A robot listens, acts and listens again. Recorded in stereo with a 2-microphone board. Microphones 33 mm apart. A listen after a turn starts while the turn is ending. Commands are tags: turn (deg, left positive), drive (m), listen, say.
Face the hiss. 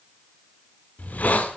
<turn deg="55"/>
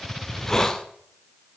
<turn deg="20"/>
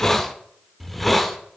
<say>Found it: a hiss, straight ahead, 1 to 2 m away.</say>